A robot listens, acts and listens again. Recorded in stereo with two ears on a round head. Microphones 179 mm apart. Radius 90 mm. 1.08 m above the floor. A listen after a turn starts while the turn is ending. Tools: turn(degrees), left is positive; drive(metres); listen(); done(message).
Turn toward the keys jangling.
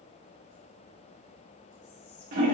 listen()
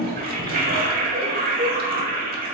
listen()
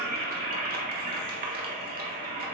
done("I can't make out keys jangling to turn to.")